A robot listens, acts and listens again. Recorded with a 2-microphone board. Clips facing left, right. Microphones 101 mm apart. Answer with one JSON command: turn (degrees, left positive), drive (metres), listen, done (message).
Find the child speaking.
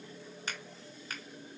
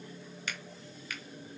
{"listen": true}
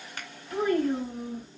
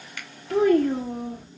{"turn": -75}
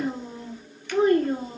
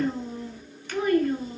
{"turn": 40}
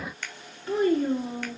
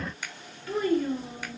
{"turn": 30}
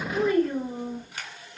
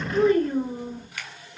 {"turn": -10}
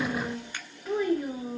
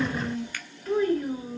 {"done": "Found it: a child speaking, straight ahead, 1 to 2 m away."}